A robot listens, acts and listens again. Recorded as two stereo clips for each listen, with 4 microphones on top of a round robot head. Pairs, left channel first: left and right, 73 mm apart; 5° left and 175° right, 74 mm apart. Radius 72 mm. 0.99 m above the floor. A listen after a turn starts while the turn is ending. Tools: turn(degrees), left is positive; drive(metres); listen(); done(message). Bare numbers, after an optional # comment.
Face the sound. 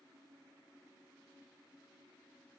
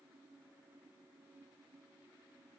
listen()
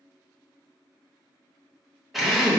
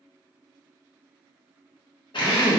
done("Facing the drill, 1 to 2 m away.")